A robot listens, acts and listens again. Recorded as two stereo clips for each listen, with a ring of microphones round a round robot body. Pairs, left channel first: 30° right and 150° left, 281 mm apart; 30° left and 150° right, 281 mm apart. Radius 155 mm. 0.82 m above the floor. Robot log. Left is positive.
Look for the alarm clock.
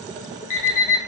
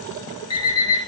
note: The alarm clock: 45° right.
cmd yaw -45
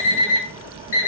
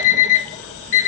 note: The alarm clock is now 10° left.
cmd yaw +10
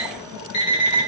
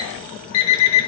end: Found it: an alarm clock, straight ahead, under 1 m away.